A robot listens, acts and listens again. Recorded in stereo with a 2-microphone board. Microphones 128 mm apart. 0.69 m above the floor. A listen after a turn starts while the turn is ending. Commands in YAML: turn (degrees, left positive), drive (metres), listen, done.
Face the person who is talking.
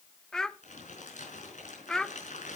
turn: 30
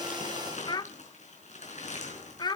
turn: 145
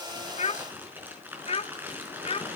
turn: 60
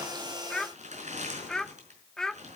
done: "Found it: a child speaking, straight ahead, under 1 m away."